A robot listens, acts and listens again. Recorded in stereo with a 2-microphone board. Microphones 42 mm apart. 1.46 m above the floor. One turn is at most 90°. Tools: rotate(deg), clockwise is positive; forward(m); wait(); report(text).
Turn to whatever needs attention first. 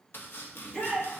rotate(-25)
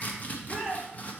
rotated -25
report("Found it: a shout, straight ahead.")